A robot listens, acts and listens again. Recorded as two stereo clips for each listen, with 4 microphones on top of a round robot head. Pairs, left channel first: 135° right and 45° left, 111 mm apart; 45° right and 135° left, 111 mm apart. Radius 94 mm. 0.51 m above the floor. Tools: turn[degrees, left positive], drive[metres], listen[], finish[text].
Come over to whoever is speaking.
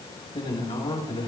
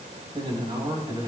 Thought: The man speaking: 175° right.
Action: turn[-175]
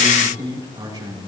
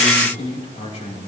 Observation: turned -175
Thought: The man speaking is now 10° right.
Action: turn[-10]
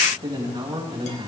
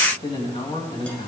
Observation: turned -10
Action: drive[1.0]
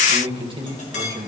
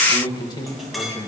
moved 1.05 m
Action: drive[1.0]
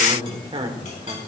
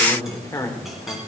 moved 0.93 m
Thought: The man speaking is now 15° left.
Action: turn[15]
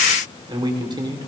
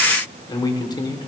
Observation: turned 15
Action: drive[1.0]
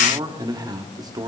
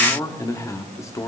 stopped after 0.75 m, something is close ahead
Action: finish[Arrived at the man speaking, straight ahead.]